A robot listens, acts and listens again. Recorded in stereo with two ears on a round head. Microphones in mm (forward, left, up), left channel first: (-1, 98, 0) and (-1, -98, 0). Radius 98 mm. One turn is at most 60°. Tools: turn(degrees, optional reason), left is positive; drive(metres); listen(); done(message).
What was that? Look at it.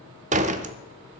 turn(degrees=-35, reason="The door slam: about 35° right or 145° right.")
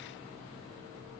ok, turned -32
listen()
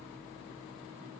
done("I heard a door slam, but can't make it out now. It was about straight ahead or 115° right.")